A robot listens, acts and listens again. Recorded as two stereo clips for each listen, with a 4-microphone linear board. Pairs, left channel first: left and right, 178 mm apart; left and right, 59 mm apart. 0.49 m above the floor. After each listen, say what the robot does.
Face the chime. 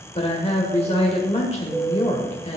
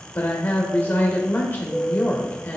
Turn 20° right.
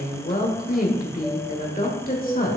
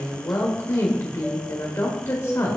Keep listening.
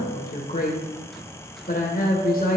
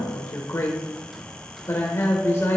Keep listening.
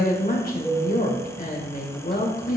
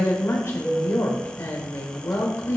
Found it: a chime, straight ahead, 1 to 2 m away.